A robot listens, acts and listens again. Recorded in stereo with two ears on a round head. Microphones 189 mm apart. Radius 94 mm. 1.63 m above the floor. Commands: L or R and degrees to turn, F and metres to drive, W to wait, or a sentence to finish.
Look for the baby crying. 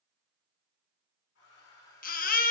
L40
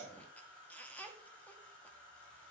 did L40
L10
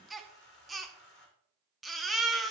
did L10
Facing the baby crying.